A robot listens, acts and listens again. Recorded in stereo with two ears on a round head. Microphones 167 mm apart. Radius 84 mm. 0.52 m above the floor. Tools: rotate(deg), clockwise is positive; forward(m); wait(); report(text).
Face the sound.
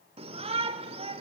rotate(30)
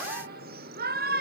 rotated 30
rotate(110)
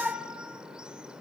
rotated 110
report("Facing the shout, 1 to 2 m away.")